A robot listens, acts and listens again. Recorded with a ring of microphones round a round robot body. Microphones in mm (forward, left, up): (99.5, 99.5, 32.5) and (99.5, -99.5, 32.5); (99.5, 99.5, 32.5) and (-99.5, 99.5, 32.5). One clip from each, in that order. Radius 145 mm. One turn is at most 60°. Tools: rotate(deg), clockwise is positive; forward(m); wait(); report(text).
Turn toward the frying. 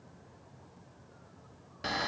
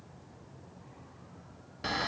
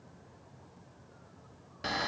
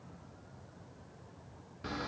wait()
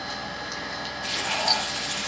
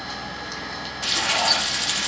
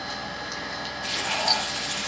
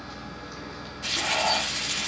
rotate(60)
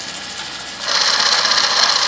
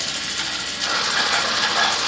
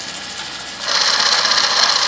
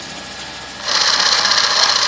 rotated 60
rotate(15)
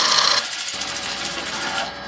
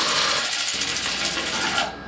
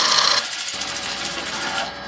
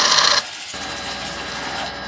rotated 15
report("Found it: frying, straight ahead, over 4 m away.")